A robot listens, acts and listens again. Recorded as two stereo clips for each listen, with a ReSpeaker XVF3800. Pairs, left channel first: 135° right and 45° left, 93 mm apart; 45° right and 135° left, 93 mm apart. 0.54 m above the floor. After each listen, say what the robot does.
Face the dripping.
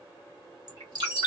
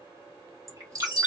Turn 80° left.
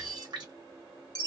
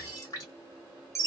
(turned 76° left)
Facing the dripping, 1 to 2 m away.